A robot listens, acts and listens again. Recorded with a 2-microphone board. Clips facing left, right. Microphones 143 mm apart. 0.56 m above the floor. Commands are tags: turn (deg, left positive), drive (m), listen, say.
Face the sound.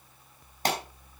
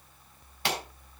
<turn deg="40"/>
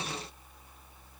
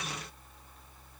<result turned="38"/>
<listen/>
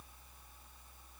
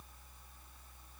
<say>I heard a pop, but can't make it out now. It was about 5° left or 100° left.</say>